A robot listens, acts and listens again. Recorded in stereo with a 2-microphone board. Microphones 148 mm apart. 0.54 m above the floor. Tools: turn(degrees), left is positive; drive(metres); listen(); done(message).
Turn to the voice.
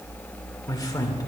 turn(degrees=25)
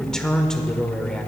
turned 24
done("Found it: a man speaking, straight ahead, 1 to 2 m away.")